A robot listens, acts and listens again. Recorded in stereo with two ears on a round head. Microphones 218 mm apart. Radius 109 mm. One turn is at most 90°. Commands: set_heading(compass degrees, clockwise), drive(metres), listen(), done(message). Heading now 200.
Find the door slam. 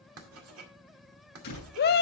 set_heading(160)
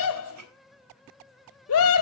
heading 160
listen()
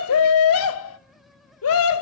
done("I heard a door slam, but can't make it out now. It was about straight ahead or 100° left.")